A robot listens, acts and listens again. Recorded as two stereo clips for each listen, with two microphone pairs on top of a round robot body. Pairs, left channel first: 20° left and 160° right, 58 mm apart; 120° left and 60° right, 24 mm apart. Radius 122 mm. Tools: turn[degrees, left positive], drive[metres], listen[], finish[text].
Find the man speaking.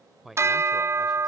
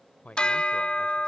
Thought: The man speaking: 115° left.
Action: turn[115]
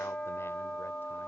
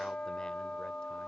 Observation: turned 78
Thought: Nothing new. It was at 35° left.
Action: turn[35]
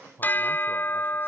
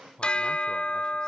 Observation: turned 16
Thought: The man speaking is now 65° left.
Action: turn[65]
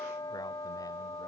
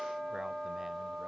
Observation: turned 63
Action: listen[]
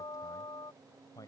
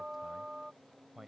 Thought: The man speaking is now 25° left.
Action: turn[25]
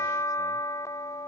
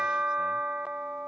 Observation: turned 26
Action: listen[]
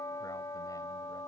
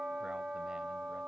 Action: listen[]
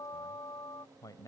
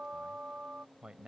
Action: finish[Facing the man speaking.]